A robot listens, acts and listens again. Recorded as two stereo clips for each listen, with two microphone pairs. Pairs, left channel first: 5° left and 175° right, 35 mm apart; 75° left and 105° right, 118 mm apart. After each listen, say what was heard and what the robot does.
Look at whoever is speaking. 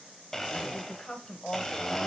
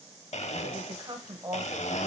The woman speaking: 45° right. Turn 45° right.
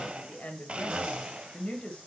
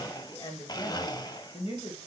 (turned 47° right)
The woman speaking is now 60° left. Turn 60° left.
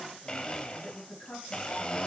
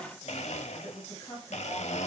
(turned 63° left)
The woman speaking is now 15° left. Turn 15° left.
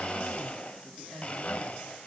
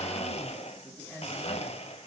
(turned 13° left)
Facing the woman speaking.